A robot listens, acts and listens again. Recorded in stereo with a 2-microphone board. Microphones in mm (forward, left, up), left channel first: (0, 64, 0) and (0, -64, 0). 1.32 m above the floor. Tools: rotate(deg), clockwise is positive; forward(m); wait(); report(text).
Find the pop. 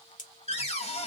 rotate(-90)
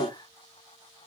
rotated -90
report("Facing where the pop came from. I can't hear it now.")